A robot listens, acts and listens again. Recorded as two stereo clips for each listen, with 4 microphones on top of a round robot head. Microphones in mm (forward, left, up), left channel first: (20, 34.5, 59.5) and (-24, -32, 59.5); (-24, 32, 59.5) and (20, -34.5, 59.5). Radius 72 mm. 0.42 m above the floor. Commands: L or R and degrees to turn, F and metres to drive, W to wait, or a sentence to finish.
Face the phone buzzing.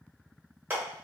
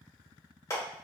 W
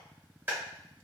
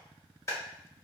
W
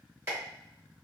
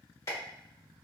I can't make out a phone buzzing to turn to.